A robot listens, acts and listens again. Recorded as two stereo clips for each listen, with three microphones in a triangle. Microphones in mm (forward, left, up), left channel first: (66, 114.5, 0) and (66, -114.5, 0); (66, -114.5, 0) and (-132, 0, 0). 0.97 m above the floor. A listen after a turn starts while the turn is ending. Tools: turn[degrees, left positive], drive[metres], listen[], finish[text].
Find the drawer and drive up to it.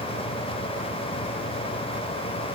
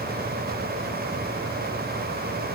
Action: listen[]
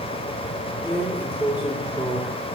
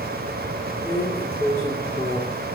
Thought: The drawer: 170° right.
Action: turn[-170]
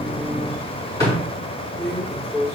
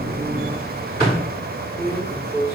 Thought: The drawer is now 15° left.
Action: turn[15]
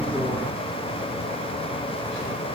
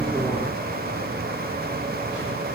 Action: listen[]
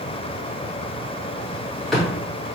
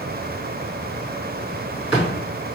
Action: drive[1.0]
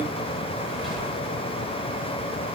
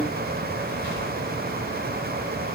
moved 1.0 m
Action: listen[]
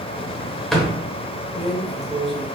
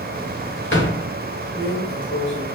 Action: drive[1.0]
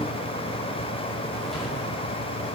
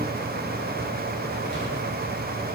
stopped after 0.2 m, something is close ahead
Action: listen[]
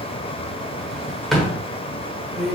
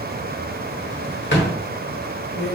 Action: finish[Arrived at the drawer, straight ahead.]